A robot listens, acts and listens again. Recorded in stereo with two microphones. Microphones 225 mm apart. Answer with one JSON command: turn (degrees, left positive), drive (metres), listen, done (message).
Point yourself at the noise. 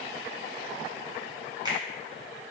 {"turn": -20}
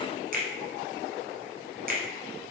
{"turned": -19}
{"turn": -140}
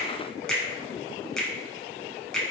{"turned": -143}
{"done": "Found it: a finger snap, straight ahead, under 1 m away."}